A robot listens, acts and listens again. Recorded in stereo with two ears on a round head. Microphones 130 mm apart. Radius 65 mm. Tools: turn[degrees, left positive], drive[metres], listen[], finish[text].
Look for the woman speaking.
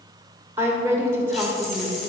Thought: The woman speaking: about 20° right or 160° right.
Action: turn[-20]
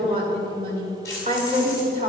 Thought: So it is at 135° right.
Action: turn[-135]
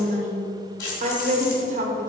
Thought: The woman speaking is now 55° right.
Action: turn[-55]
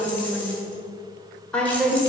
Thought: The woman speaking is now 10° left.
Action: turn[10]
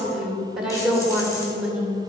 Action: finish[Found it: a woman speaking, straight ahead.]